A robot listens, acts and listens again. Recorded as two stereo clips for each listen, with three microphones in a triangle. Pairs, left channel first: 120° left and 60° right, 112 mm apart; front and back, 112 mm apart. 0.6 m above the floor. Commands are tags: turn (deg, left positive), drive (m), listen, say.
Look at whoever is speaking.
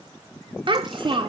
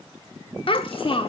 <turn deg="-25"/>
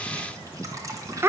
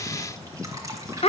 <say>Found it: a child speaking, straight ahead.</say>